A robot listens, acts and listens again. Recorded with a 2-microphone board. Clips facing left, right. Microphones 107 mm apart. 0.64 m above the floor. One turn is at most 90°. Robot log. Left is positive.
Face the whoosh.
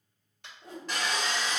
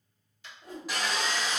note: The whoosh: about 30° left or 150° left.
cmd yaw +30
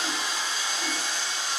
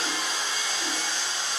cmd idle
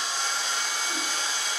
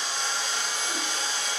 cmd idle
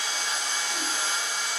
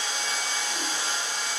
end: I heard a whoosh, but can't make it out now. It was about straight ahead or 120° left.